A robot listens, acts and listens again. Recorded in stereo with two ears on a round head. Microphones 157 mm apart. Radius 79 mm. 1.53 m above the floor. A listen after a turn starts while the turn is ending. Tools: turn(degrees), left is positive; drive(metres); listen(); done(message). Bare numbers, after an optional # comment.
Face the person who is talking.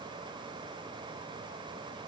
listen()
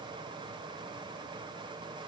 listen()
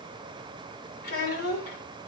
# The child speaking: about 55° left or 125° left.
turn(55)
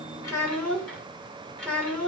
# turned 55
done("Facing the child speaking.")